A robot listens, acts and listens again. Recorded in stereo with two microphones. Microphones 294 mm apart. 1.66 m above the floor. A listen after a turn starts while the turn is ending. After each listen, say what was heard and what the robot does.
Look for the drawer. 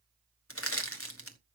Keep listening.
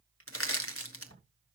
The drawer: about 50° left or 130° left. Turn 50° left.
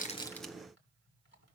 Keep listening.
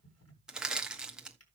So it is at 70° left. Turn 70° left.
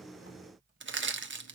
Keep listening.
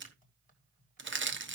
Keep listening.
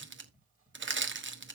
The drawer is now 35° left. Turn 35° left.
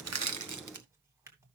The drawer is now 10° right. Turn 10° right.
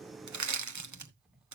Found it: a drawer, straight ahead.